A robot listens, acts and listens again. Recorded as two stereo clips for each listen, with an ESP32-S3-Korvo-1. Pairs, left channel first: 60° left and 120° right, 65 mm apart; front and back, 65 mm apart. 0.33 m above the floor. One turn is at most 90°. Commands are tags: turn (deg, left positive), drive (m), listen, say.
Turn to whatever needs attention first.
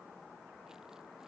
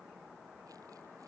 <listen/>
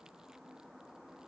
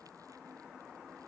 <listen/>
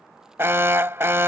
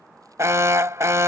<turn deg="-90"/>
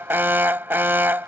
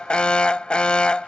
<turn deg="-70"/>
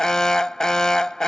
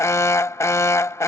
<turn deg="-15"/>
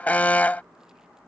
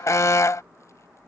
<say>Found it: an alarm, straight ahead.</say>